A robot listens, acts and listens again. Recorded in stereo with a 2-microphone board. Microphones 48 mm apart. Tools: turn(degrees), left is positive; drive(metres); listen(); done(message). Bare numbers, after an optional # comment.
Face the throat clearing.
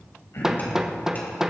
# The throat clearing: about 65° left or 115° left.
turn(65)
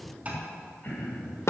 # So it is at 45° left.
turn(45)
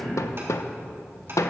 # The throat clearing is now 25° left.
turn(25)
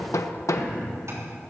done("Found it: throat clearing, straight ahead, over 4 m away.")